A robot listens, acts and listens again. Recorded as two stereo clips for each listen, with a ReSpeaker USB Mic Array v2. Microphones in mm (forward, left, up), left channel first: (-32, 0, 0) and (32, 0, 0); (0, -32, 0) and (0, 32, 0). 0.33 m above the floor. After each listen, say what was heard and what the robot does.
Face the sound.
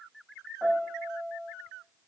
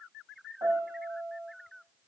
The piano: 85° left. Turn 85° left.
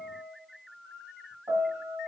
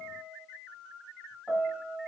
The piano is now 10° left. Turn 10° left.
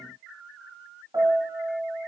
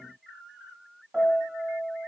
Facing the piano.